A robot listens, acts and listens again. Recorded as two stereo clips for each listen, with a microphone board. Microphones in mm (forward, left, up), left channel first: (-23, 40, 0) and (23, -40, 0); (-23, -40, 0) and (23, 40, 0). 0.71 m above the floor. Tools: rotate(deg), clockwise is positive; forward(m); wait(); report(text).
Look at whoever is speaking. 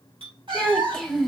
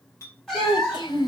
rotate(155)
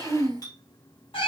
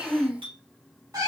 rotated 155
rotate(15)
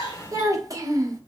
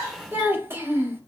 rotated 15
report("Facing the child speaking.")